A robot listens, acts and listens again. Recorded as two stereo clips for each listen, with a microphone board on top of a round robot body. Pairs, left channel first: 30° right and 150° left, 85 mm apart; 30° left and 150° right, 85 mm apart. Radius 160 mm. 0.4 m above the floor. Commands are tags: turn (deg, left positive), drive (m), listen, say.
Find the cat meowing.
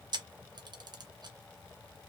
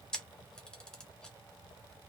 <listen/>
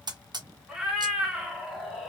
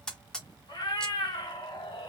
<turn deg="65"/>
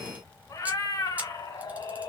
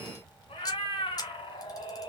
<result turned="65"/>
<turn deg="10"/>
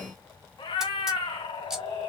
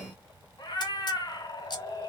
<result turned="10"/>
<turn deg="-15"/>
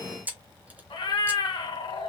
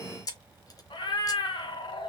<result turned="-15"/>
<say>Found it: a cat meowing, straight ahead.</say>